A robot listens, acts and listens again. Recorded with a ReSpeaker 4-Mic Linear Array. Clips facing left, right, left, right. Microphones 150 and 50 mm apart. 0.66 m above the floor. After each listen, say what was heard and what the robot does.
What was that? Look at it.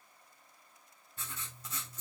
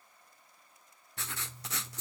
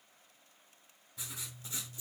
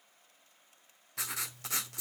Turn 90° right.
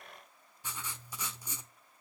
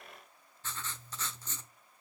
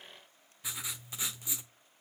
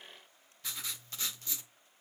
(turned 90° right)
So it is at 15° left. Turn 15° left.
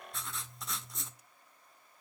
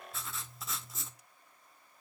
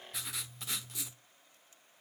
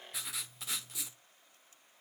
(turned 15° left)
Facing the writing, 1 to 2 m away.